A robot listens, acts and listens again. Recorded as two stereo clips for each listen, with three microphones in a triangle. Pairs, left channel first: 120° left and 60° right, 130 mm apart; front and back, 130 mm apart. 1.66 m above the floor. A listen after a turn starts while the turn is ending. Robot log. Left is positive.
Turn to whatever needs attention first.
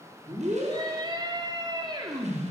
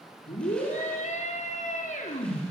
end: Found it: a scream, straight ahead.